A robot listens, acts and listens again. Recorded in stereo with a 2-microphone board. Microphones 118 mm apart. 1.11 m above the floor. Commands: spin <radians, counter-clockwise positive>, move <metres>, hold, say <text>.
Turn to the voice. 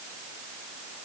hold
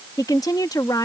spin 0.61
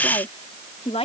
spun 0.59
spin 2.01
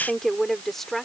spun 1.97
say Facing the woman speaking.